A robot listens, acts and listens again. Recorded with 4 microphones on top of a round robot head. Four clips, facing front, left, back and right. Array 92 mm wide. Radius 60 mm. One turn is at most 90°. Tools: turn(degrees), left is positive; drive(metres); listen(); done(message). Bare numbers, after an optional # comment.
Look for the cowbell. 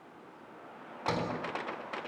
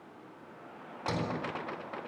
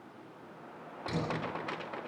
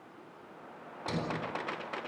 listen()
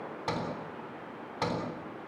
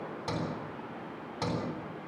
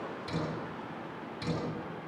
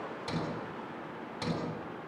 listen()
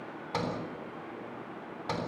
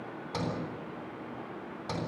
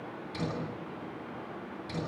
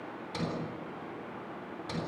done("I can't make out a cowbell, only a sliding door.")